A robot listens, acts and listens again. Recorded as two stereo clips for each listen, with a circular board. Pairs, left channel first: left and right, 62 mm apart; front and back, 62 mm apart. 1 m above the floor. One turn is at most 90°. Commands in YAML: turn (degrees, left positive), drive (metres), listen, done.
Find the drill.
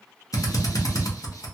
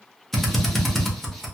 turn: 90
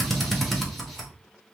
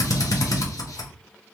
done: "Facing the drill."